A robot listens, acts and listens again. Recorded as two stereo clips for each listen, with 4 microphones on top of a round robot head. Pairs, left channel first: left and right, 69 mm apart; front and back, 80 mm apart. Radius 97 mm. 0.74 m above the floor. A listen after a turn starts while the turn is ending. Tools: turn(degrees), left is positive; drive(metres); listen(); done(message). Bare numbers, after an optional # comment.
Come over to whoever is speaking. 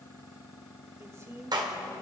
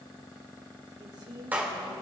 # The woman speaking: 140° right.
turn(-140)
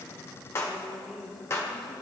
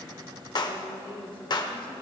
drive(1.0)
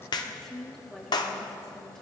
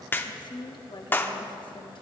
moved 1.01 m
drive(1.0)
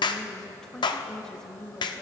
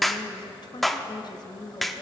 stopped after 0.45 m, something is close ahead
# The woman speaking is now 10° left.
turn(10)
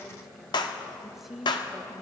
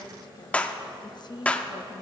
done("I am next to the woman speaking.")